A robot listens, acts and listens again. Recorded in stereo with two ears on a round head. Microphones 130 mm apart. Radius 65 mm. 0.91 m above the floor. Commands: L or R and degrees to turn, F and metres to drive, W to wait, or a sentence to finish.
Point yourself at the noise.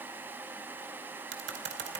R90
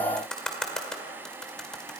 Found it: typing on a keyboard, straight ahead, 2 to 4 m away.